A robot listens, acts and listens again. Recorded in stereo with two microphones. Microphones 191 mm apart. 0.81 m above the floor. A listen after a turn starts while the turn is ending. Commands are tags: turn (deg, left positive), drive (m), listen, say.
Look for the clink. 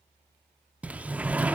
<listen/>
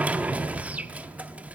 <listen/>
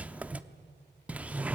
<say>I can't make out a clink to turn to.</say>